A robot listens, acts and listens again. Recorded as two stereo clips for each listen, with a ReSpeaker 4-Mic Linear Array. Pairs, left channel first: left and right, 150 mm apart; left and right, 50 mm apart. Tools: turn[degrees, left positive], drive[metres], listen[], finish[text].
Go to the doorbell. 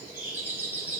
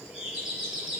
Action: turn[-30]
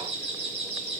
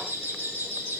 Thought: So it is at 135° right.
Action: turn[-135]
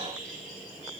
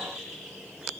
Action: drive[1.0]
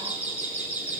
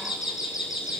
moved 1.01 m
Thought: The doorbell is now 10° right.
Action: turn[-10]
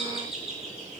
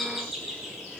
Action: drive[1.0]
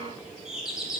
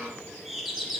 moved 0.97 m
Action: drive[1.0]
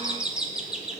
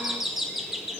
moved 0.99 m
Action: drive[1.0]
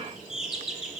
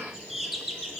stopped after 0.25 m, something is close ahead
Action: finish[Arrived at the doorbell, straight ahead.]